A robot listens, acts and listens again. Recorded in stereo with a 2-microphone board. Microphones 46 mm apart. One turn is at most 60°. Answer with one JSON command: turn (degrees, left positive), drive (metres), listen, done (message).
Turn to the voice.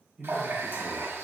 {"turn": -20}
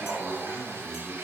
{"turn": -60}
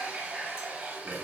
{"turn": -60}
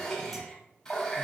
{"turn": -20}
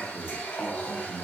{"done": "Facing the man speaking."}